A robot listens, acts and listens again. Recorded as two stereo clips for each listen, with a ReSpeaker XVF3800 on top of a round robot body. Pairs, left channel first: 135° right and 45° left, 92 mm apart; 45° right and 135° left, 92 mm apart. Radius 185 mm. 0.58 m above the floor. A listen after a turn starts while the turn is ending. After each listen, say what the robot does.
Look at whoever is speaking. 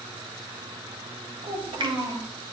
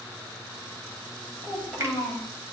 Turn 40° left.
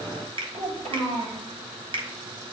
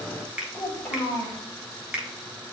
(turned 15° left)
Turn 25° left.
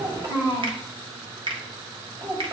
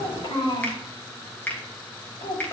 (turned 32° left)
Turn 10° right.
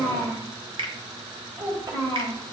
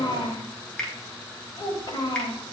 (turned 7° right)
Found it: a child speaking, straight ahead, 2 to 4 m away.